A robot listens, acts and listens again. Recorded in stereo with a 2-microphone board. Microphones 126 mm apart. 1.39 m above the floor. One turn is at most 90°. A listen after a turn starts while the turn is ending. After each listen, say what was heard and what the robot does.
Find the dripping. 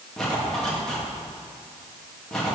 Keep listening.
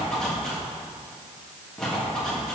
Keep listening.
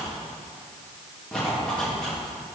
I can't make out dripping, only a zipper.